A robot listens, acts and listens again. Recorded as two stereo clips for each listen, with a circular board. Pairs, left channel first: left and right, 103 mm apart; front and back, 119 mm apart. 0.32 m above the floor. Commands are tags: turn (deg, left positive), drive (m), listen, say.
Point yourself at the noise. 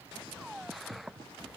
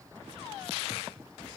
<listen/>
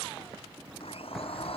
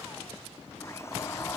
<turn deg="65"/>
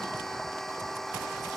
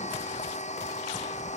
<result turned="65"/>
<say>Found it: a blender, straight ahead.</say>